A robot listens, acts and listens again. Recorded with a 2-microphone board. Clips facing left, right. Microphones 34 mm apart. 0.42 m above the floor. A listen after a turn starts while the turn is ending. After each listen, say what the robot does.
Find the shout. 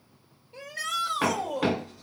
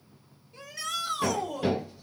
Turn 45° left.
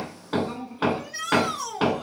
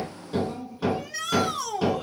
Facing the shout, 1 to 2 m away.